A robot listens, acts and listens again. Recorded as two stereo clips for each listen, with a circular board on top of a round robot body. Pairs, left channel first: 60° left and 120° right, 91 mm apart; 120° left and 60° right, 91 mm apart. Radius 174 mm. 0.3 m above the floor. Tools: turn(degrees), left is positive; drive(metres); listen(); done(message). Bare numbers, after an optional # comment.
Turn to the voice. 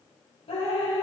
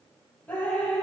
listen()
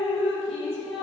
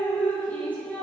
listen()
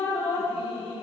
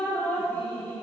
done("I can't make out anyone speaking, only dripping.")